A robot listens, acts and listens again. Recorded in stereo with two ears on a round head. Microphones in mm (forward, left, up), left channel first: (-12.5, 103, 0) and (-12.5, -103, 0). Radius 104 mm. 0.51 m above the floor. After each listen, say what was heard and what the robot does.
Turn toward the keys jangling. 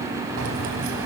The keys jangling: about 55° right or 125° right. Turn 55° right.
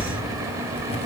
So it is at 25° left. Turn 25° left.
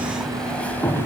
The keys jangling is now 10° left. Turn 10° left.
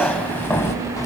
The keys jangling is now 15° left. Turn 15° left.
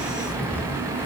The keys jangling is now 10° left. Turn 10° left.
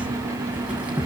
Found it: keys jangling, straight ahead.